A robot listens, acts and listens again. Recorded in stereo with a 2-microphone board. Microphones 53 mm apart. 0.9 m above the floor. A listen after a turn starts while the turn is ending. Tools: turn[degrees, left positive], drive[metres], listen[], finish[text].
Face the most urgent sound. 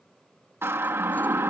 Thought: The siren: about 50° right or 130° right.
Action: turn[-50]
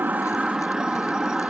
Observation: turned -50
Thought: So it is at 15° right.
Action: turn[-15]
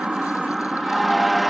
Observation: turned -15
Action: finish[Found it: a siren, straight ahead.]